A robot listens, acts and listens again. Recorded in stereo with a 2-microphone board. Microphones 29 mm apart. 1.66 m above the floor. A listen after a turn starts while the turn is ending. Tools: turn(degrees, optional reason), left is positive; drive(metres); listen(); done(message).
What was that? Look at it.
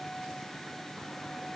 listen()
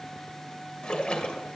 turn(degrees=40, reason="The splash: about 40° left or 140° left.")
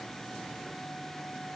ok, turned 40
listen()
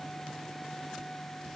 done("I heard a splash, but can't make it out now. It was about straight ahead or 100° left.")